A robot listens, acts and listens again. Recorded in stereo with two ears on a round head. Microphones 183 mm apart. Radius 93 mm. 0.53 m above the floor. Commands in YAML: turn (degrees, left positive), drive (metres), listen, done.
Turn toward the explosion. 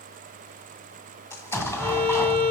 turn: 30
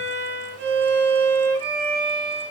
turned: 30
listen: true
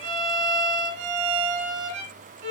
done: "I heard an explosion, but can't make it out now. It was about 15° right or 135° left."